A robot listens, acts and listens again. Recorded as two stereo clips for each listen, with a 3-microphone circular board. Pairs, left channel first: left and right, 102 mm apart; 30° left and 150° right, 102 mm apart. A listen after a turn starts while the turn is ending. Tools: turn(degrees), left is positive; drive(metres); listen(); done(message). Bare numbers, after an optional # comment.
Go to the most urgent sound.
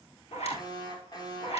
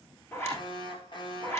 # The alarm: 50° left.
turn(50)
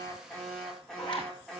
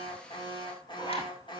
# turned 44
drive(1.0)
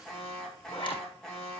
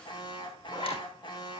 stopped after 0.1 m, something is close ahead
done("Something is in my way. I am facing the alarm but have not reached it.")